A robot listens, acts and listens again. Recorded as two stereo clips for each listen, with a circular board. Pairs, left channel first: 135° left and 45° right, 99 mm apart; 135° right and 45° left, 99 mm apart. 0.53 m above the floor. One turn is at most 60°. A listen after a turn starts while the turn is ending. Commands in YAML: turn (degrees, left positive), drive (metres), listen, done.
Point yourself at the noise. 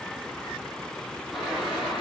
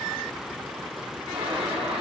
turn: 40
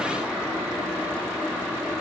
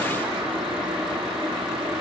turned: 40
turn: 25
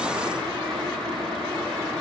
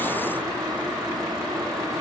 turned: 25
turn: -10
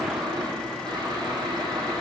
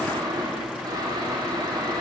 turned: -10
done: "Found it: boiling, straight ahead."